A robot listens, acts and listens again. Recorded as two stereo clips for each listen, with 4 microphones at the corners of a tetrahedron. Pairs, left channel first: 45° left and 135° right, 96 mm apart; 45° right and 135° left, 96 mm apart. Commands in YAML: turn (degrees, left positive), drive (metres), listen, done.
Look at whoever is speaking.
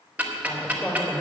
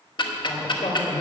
turn: -30
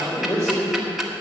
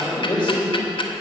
turn: -10
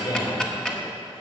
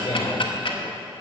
done: "Facing the man speaking."